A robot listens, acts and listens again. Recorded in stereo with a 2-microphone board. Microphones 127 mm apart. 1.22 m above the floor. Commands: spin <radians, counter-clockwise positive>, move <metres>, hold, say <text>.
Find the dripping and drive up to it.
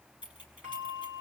hold
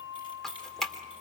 spin 0.52
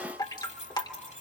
spin 2.53
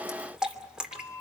move 1.0
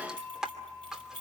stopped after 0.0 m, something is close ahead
say Something is in my way. I am facing the dripping but have not reached it.